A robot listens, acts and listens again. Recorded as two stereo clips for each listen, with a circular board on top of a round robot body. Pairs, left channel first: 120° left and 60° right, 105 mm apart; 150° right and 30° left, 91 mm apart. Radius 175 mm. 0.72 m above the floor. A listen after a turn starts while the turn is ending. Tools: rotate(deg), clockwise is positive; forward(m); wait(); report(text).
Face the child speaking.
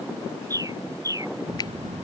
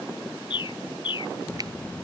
rotate(75)
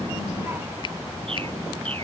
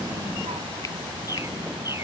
rotate(-10)
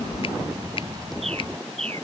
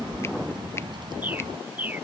report("Facing the child speaking.")